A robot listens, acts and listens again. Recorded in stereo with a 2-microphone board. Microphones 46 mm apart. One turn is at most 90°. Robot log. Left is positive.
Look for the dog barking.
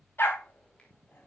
note: The dog barking: about 55° left or 125° left.
cmd yaw +55
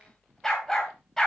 note: So it is at 10° left.
cmd yaw +10
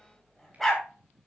end: Found it: a dog barking, straight ahead.